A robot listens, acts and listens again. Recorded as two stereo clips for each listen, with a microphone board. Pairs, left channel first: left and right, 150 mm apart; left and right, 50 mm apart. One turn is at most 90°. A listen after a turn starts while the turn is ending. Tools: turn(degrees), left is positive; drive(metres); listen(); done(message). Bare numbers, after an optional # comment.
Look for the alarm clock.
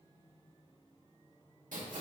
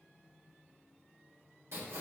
listen()
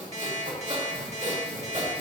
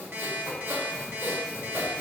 # The alarm clock: about 50° right or 130° right.
turn(-50)
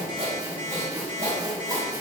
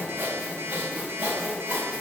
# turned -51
# So it is at 75° right.
turn(-75)
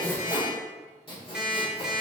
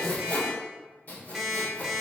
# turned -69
done("Found it: an alarm clock, straight ahead.")